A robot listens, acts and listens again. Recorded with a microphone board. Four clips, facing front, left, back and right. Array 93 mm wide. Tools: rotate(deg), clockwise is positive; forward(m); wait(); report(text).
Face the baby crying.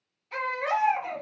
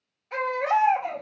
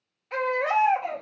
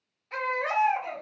rotate(-165)
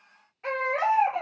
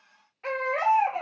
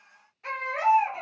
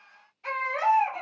rotate(-60)
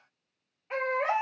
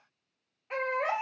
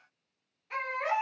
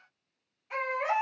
rotate(-40)
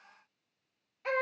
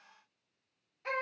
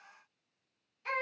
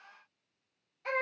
report("Facing the baby crying.")